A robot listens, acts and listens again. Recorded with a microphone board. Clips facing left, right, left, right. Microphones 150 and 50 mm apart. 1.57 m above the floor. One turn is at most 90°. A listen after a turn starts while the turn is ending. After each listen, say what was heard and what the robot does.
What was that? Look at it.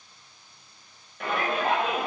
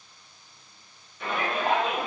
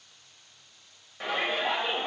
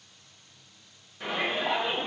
The shout: about 60° left or 120° left. Turn 60° left.
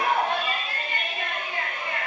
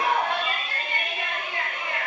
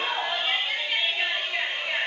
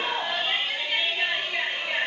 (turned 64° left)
Facing the shout, 1 to 2 m away.